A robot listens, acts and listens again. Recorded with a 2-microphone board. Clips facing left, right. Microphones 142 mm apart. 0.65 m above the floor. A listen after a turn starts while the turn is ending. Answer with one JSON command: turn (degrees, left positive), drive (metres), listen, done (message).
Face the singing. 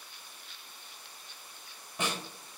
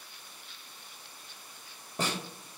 {"listen": true}
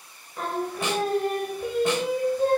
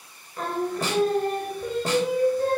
{"turn": 20}
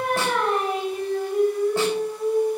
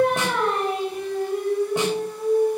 {"turn": 30}
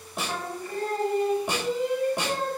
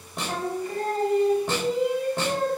{"turn": -20}
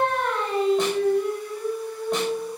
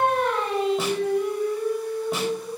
{"done": "Found it: singing, straight ahead."}